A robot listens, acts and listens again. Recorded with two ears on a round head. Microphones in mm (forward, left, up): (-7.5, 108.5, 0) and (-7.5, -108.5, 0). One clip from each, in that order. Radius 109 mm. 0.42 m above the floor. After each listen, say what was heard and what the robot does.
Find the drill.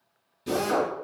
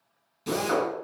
The drill: about 35° right or 145° right. Turn 35° right.
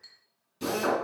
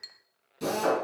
Found it: a drill, straight ahead.